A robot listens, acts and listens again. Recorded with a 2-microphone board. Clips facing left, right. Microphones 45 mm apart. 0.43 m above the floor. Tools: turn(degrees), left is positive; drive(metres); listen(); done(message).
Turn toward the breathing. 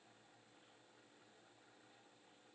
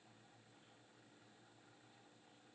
listen()
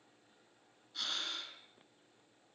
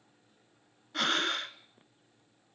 turn(degrees=-60)
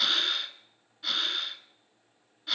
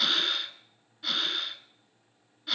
done("Facing the breathing, 1 to 2 m away.")